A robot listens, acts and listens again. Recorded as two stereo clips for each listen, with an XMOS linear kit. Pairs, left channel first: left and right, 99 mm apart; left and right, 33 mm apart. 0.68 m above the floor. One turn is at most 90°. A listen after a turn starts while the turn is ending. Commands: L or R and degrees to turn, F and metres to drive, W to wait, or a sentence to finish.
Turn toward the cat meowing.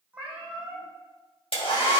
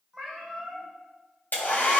R30
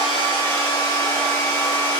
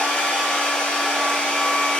W
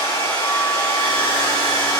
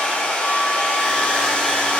W
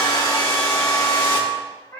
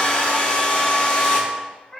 L25
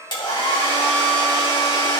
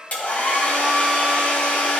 W
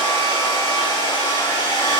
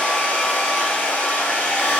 W
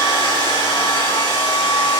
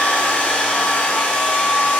Facing where the cat meowing came from. I can't hear it now.